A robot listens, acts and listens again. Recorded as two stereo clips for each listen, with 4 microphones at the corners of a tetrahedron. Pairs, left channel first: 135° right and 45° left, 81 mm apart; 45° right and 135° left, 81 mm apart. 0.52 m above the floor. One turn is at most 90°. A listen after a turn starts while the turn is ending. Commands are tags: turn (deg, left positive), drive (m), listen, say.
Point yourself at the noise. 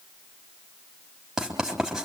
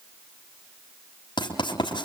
<turn deg="-35"/>
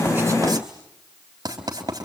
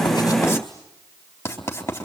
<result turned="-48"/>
<turn deg="15"/>
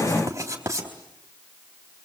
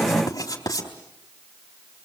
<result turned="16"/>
<say>Found it: writing, straight ahead.</say>